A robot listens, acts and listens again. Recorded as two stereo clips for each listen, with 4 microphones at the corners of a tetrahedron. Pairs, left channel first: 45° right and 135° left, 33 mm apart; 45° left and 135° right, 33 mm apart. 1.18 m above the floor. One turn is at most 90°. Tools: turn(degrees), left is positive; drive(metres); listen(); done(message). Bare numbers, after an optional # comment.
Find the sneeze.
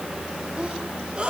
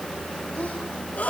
# The sneeze: 80° left.
turn(80)
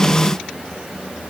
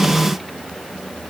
done("I heard a sneeze from this way, but can't make it out now.")